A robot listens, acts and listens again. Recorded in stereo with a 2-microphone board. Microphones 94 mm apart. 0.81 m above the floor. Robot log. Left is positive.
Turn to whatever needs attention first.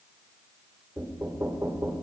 cmd idle
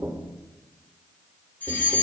note: The fire alarm: about 20° left or 160° left.
cmd yaw +20
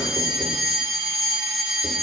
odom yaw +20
end: Facing the fire alarm, over 4 m away.